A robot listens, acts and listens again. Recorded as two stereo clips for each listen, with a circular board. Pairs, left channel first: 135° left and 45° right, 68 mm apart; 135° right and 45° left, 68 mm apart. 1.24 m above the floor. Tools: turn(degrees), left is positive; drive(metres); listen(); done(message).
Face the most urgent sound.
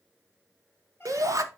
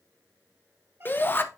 turn(degrees=-80)
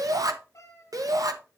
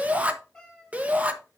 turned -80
turn(degrees=-20)
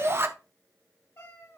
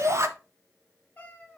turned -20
done("Facing the shout.")